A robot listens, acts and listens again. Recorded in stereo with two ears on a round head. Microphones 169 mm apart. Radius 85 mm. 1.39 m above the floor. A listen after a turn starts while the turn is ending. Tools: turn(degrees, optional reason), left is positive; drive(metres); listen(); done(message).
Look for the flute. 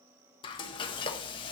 listen()
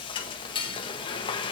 listen()
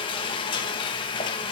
done("I can't make out a flute to turn to.")